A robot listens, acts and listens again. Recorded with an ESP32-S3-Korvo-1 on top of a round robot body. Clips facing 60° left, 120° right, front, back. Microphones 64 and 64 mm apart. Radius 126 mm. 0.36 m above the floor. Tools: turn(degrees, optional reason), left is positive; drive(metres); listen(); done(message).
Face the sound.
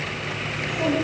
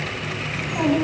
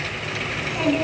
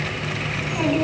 turn(degrees=-95, reason="The child speaking: 95° right.")
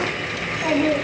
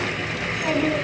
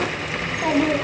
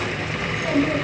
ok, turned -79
done("Facing the child speaking.")